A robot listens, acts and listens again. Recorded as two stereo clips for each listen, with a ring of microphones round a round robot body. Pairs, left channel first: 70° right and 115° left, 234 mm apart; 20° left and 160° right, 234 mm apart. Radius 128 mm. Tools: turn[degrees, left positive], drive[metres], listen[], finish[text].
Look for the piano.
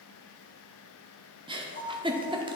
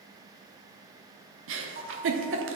Thought: The piano: 110° right.
Action: turn[-110]
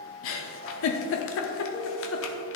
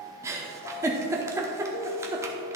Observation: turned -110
Thought: The piano is now 10° right.
Action: turn[-10]
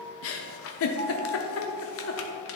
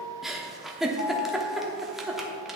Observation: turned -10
Action: finish[Facing the piano.]